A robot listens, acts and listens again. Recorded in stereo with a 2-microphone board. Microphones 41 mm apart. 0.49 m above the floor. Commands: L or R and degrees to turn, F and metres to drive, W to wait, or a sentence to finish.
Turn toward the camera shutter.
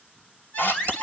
L65
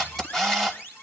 L20
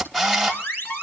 L10
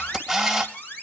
Found it: a camera shutter, straight ahead, 2 to 4 m away.